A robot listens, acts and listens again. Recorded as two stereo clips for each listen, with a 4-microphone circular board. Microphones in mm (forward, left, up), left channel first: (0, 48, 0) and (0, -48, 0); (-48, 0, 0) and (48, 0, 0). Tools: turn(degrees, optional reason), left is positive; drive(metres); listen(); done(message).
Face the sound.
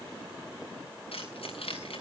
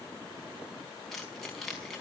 turn(degrees=95, reason="The keys jangling: 95° left.")
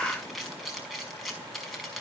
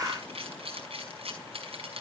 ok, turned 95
done("Facing the keys jangling, over 4 m away.")